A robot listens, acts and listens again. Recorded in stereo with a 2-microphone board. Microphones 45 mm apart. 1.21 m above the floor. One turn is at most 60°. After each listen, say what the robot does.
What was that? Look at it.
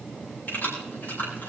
Turn 45° left.
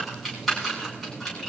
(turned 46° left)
Found it: keys jangling, straight ahead.